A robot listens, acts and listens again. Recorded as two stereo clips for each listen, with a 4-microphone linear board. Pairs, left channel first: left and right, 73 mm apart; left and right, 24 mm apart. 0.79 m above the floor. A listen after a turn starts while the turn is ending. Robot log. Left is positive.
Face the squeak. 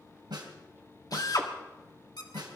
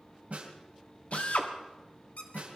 note: The squeak: about 75° left or 105° left.
cmd yaw +75
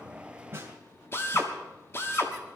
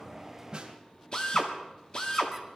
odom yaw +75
cmd idle
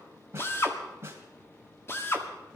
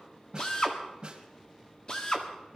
cmd idle
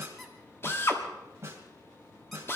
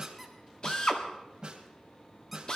end: Facing the squeak, 2 to 4 m away.